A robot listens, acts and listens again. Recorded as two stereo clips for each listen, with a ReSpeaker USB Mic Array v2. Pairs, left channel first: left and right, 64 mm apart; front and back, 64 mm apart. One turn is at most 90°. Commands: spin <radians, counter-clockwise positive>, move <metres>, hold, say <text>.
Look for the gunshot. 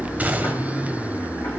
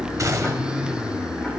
spin -1.57
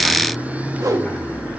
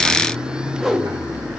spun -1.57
spin -1.13
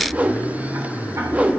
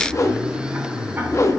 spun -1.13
say Facing where the gunshot came from. I can't hear it now.